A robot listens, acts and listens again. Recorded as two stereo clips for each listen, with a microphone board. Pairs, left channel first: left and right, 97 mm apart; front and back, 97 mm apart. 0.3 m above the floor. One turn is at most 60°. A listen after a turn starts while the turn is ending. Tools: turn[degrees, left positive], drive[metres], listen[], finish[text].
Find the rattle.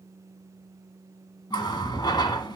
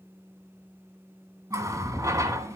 Thought: The rattle: 70° left.
Action: turn[60]
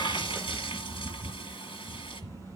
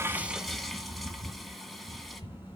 Thought: The rattle is now 30° left.
Action: turn[30]
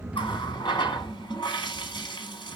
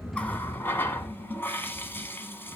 Thought: The rattle is now 10° left.
Action: turn[10]
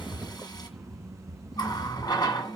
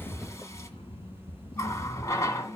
Action: finish[Facing the rattle, 2 to 4 m away.]